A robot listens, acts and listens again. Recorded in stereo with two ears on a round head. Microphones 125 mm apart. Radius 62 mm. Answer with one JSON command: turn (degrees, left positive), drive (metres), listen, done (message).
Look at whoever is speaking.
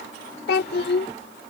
{"turn": 90}
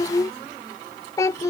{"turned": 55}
{"turn": 25}
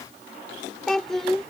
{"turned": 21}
{"done": "Facing the child speaking."}